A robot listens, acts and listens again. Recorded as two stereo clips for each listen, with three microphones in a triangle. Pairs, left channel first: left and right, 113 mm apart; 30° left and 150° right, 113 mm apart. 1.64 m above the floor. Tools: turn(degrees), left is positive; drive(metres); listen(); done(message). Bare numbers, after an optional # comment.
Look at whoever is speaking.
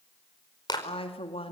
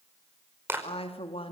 # The woman speaking: 60° left.
turn(60)
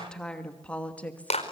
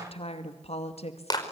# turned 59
# The woman speaking is now 15° left.
turn(15)
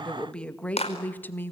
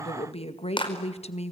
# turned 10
# The woman speaking is now 20° left.
turn(20)
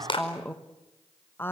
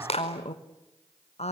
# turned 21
# The woman speaking is now 20° left.
turn(20)
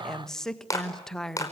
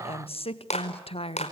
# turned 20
done("Facing the woman speaking, 1 to 2 m away.")